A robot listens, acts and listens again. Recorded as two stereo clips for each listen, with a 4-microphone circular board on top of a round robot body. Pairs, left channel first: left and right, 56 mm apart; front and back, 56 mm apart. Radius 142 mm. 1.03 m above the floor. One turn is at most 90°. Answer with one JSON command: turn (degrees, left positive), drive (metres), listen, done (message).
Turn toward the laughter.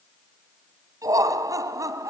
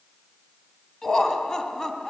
{"turn": -75}
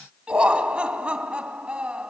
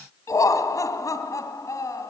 {"turn": -15}
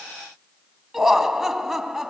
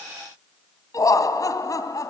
{"done": "Found it: laughter, straight ahead."}